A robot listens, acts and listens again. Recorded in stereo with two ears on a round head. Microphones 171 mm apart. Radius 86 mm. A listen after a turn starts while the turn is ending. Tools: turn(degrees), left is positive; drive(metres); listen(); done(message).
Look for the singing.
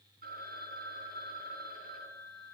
listen()
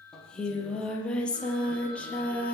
turn(degrees=30)
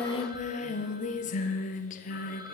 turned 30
turn(degrees=135)
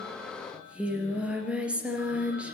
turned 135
done("Found it: singing, straight ahead, 2 to 4 m away.")